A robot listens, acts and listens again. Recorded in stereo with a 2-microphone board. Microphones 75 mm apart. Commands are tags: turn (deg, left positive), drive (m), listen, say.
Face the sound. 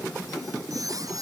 <turn deg="-50"/>
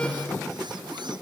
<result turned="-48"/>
<listen/>
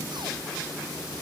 <listen/>
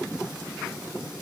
<say>I heard a squeak, but can't make it out now. It was about 5° right or 80° right.</say>